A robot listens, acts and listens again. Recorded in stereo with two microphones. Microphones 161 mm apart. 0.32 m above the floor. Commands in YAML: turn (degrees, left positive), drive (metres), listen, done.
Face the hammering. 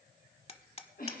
turn: 40
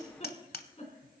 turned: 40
turn: 95
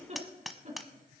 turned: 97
done: "Found it: hammering, straight ahead."